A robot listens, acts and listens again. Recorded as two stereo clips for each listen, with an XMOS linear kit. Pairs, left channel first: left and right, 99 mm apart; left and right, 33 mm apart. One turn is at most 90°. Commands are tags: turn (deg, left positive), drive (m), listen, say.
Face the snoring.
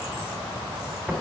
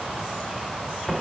<listen/>
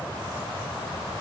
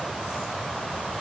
<listen/>
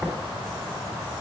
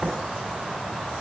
<say>I can't make out snoring to turn to.</say>